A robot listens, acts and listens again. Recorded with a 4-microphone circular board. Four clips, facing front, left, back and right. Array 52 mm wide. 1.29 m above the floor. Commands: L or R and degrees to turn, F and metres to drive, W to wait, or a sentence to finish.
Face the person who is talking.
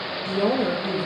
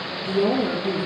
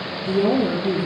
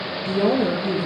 R45
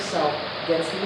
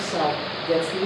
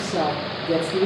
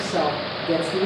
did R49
Facing the woman speaking.